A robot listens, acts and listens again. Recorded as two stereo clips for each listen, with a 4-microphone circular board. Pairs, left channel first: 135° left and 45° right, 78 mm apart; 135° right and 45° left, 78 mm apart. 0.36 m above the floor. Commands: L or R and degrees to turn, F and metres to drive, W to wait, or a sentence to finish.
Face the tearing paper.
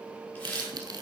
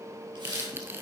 R15
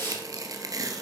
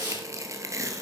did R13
Facing the tearing paper, 1 to 2 m away.